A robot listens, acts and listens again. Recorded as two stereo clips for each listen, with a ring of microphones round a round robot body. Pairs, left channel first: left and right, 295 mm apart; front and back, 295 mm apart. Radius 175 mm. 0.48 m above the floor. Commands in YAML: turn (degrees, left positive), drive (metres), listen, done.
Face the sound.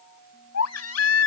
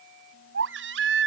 turn: 125
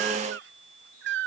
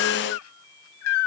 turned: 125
turn: -35
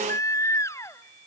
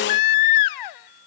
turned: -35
turn: 10
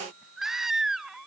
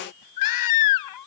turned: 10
done: "Found it: a baby crying, straight ahead."